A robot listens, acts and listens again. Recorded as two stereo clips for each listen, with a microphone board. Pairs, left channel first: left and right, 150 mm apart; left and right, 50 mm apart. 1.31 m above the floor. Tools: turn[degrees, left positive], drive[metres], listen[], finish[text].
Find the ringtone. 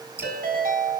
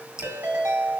Action: turn[-90]
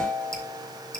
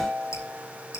Thought: So it is at 15° right.
Action: turn[-15]
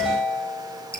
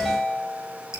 Action: finish[Found it: a ringtone, straight ahead, over 4 m away.]